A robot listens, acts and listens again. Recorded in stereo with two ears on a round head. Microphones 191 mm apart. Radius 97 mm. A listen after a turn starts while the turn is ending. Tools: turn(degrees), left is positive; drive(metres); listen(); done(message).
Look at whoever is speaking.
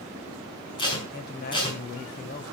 turn(degrees=45)
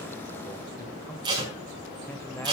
listen()
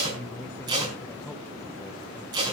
turn(degrees=15)
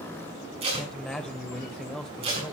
done("Found it: a man speaking, straight ahead.")